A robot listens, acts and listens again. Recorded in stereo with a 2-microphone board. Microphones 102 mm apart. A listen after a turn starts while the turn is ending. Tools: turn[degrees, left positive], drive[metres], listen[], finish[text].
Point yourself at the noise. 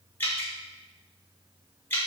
Thought: The dripping: about 20° left or 160° left.
Action: turn[20]
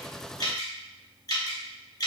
Thought: So it is at 140° left.
Action: turn[140]
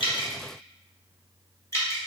Thought: The dripping is now 30° left.
Action: turn[30]
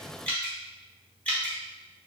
Thought: The dripping is now 15° left.
Action: turn[15]
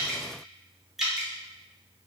Action: finish[Found it: dripping, straight ahead, under 1 m away.]